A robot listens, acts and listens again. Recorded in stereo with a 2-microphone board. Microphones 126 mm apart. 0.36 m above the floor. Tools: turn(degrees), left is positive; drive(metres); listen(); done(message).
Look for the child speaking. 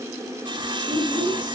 turn(degrees=-30)
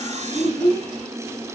turn(degrees=15)
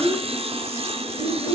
done("Facing the child speaking.")